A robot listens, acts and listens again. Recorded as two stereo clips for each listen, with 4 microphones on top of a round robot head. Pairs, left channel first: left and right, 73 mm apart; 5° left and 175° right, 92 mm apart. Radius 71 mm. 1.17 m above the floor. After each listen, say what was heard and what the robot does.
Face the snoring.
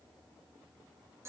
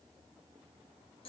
Keep listening.
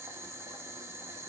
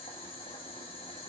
Keep listening.
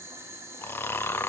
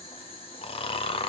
The snoring: 30° left. Turn 30° left.
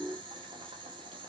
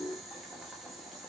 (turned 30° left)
Keep listening.
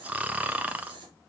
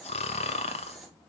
The snoring is now 20° right. Turn 20° right.
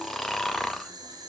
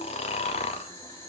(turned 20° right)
Facing the snoring.